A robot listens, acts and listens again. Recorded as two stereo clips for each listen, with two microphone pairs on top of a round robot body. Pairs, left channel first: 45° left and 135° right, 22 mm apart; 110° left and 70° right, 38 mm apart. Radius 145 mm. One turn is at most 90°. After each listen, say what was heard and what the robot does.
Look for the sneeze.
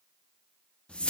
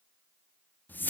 Keep listening.
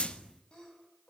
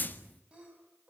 Facing the sneeze, over 4 m away.